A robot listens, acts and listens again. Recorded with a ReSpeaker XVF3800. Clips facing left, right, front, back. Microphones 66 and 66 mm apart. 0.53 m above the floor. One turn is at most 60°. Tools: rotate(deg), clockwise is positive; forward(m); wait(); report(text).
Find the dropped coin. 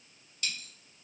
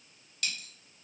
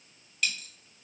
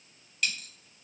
rotate(60)
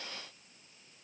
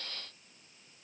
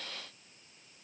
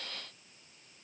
rotate(30)
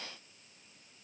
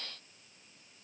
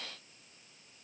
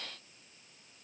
report("I heard a dropped coin from this way, but can't make it out now.")